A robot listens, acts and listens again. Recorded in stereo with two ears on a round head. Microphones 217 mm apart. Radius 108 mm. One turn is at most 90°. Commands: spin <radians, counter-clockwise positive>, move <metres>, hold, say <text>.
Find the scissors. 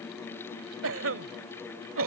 hold
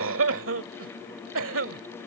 hold
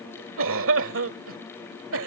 say I can't make out scissors, only a cough.